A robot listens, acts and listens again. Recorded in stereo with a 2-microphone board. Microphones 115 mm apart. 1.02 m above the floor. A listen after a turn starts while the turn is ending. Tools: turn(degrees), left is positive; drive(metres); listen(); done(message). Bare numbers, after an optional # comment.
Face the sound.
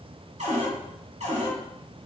# The cupboard door: about 70° right or 110° right.
turn(-70)
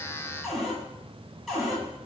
done("Found it: a cupboard door, straight ahead.")